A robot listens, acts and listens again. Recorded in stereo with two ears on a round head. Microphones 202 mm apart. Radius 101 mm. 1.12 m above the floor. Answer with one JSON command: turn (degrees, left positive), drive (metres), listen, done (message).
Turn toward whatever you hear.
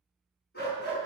{"turn": 50}
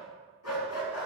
{"turn": 75}
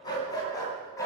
{"turn": 15}
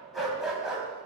{"done": "Found it: a dog barking, straight ahead, 2 to 4 m away."}